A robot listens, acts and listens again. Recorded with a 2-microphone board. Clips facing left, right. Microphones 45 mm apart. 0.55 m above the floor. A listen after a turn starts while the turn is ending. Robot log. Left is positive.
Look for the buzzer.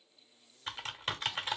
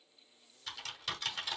cmd idle
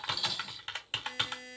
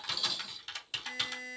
note: The buzzer: about 35° right or 145° right.
cmd yaw -35
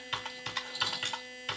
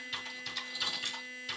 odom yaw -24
note: So it is at 15° right.
cmd yaw -15
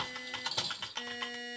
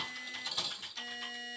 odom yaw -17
end: Found it: a buzzer, straight ahead, 2 to 4 m away.